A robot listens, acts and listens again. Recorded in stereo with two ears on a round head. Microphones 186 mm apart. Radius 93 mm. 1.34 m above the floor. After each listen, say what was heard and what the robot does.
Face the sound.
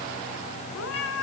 Turn 90° left.
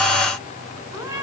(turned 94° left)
So it is at 15° right. Turn 15° right.
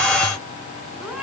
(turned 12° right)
Found it: a cat meowing, straight ahead, over 4 m away.